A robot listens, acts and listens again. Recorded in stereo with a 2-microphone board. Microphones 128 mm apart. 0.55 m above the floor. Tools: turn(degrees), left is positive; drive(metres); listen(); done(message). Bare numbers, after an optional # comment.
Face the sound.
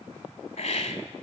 # The hiss: about 60° left or 120° left.
turn(60)
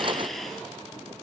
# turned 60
done("Facing the hiss.")